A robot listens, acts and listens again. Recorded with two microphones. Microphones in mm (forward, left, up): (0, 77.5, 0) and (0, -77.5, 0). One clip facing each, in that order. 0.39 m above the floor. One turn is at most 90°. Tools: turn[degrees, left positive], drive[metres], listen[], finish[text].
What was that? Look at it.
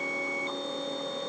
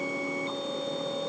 Action: listen[]
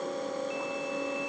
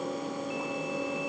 Action: listen[]
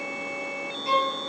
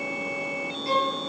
Thought: The violin: about 20° left or 160° left.
Action: turn[20]
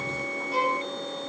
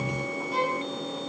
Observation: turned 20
Action: finish[Found it: a violin, straight ahead, 2 to 4 m away.]